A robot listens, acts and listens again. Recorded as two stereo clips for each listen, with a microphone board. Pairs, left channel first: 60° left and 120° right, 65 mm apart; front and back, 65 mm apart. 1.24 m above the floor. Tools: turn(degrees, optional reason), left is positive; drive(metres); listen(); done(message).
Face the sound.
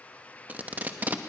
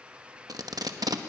turn(degrees=175, reason="The tape being pulled: 175° left.")
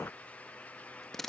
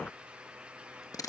turn(degrees=-25, reason="The tape being pulled is now 25° right.")
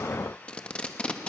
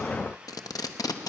turn(degrees=-15, reason="The tape being pulled is now 15° right.")
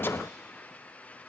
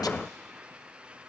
listen()
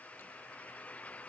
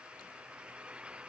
listen()
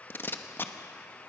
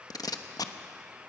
done("Found it: tape being pulled, straight ahead.")